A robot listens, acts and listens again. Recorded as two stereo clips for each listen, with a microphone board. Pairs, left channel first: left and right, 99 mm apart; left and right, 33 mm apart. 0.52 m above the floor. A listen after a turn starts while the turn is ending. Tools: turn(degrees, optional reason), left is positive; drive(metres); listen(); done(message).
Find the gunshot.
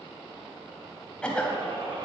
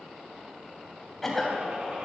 turn(degrees=-45, reason="The gunshot: about 45° right or 135° right.")
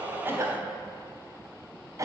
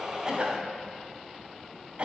listen()
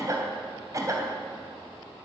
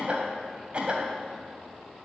done("I heard a gunshot, but can't make it out now. It was about straight ahead or 90° right.")